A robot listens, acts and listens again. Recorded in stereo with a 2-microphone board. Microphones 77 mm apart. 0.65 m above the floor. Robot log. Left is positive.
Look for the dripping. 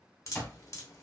note: The dripping: about 40° left or 140° left.
cmd yaw +40
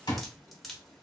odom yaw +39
end: Found it: dripping, straight ahead.